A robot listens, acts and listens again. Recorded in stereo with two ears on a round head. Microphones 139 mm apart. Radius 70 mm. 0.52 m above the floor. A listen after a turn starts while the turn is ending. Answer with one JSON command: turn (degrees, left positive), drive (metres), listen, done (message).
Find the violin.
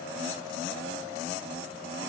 {"listen": true}
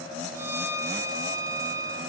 {"turn": -20}
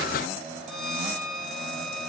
{"done": "Facing the violin, under 1 m away."}